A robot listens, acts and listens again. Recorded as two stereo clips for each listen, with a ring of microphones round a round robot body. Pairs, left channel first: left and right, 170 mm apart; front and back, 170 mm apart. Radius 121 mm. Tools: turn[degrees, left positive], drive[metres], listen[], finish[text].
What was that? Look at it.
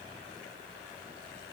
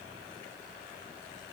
Action: listen[]
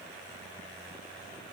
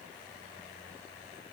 Action: listen[]
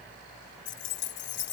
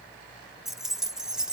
Thought: The keys jangling: 95° left.
Action: turn[95]
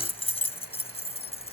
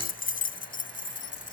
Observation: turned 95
Thought: The keys jangling is now 35° left.
Action: turn[35]
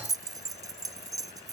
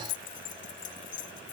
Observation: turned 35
Thought: The keys jangling is now 20° right.
Action: turn[-20]
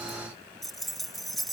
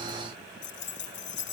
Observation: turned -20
Action: finish[Facing the keys jangling.]